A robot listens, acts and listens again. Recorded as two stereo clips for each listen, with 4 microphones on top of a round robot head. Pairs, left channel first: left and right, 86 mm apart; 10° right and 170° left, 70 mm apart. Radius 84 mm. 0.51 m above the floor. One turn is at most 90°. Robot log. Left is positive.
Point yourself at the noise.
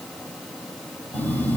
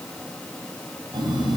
note: The phone buzzing: 160° left.
cmd yaw +90
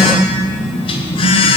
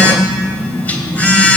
note: The phone buzzing is now 60° left.
cmd yaw +60
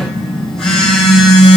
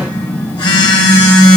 end: Facing the phone buzzing, 1 to 2 m away.